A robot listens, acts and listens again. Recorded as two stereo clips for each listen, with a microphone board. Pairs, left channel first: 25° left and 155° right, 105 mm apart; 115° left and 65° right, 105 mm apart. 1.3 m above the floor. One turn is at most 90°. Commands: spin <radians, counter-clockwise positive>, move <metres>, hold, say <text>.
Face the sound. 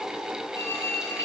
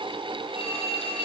spin 1.57
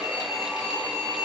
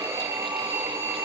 say Facing the phone ringing, over 4 m away.